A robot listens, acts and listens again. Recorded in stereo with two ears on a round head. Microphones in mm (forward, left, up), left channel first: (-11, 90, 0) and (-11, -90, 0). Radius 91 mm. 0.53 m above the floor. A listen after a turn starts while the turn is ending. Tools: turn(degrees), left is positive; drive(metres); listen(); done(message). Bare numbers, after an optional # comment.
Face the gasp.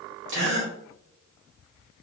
# The gasp: about 60° right or 120° right.
turn(-60)
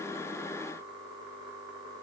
listen()
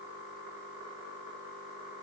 done("I heard a gasp, but can't make it out now. It was about straight ahead or 60° right.")